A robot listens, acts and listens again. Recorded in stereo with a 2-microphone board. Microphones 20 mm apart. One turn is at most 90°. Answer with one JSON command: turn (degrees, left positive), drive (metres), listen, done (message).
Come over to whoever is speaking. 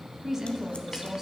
{"turn": -25}
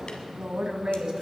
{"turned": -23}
{"turn": -90}
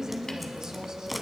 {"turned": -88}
{"turn": -40}
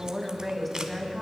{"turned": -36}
{"drive": 1.0}
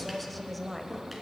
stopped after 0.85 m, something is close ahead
{"done": "I am next to the woman speaking."}